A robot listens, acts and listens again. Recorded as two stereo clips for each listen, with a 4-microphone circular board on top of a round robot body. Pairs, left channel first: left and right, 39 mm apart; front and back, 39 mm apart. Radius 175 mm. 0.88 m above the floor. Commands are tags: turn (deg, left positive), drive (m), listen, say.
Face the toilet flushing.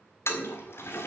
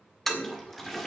<turn deg="85"/>
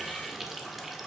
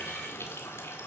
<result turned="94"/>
<turn deg="-10"/>
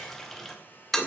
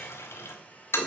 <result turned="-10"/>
<say>Found it: a toilet flushing, straight ahead.</say>